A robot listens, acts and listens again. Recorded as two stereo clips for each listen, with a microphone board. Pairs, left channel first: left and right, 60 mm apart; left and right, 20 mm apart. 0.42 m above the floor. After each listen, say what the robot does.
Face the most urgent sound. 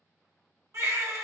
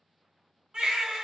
Turn 50° right.
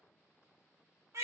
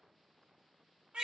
Turn 70° right.
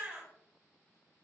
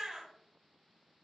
Turn 30° right.
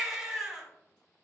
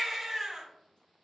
Turn 10° right.
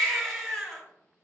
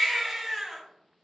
Found it: a baby crying, straight ahead, 1 to 2 m away.